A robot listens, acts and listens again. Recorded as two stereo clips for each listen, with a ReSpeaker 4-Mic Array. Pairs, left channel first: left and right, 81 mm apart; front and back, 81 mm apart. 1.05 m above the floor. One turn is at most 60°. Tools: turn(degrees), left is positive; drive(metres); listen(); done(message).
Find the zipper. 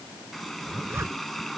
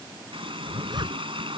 turn(degrees=-60)
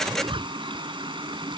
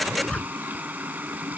turn(degrees=-60)
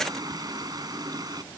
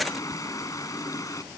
turn(degrees=-20)
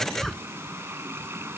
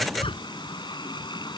done("Facing the zipper.")